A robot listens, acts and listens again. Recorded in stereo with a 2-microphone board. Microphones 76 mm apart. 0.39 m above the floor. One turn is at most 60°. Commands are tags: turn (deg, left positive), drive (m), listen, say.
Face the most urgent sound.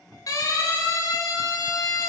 <turn deg="50"/>
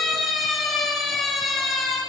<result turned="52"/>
<say>Found it: a siren, straight ahead.</say>